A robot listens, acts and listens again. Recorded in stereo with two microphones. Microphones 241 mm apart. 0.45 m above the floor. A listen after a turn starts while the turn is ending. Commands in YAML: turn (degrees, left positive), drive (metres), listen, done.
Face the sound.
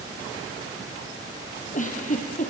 turn: 30
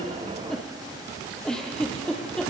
done: "Found it: a giggle, straight ahead, 2 to 4 m away."